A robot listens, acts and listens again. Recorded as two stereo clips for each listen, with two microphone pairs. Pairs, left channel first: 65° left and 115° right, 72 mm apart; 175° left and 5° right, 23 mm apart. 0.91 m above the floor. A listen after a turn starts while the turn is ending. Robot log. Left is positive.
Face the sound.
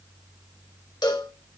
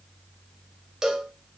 note: The cowbell: 65° left.
cmd yaw +65
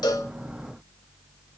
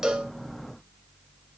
cmd idle
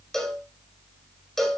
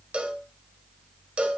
note: The cowbell is now 20° right.
cmd yaw -20
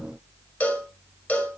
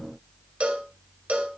end: Found it: a cowbell, straight ahead.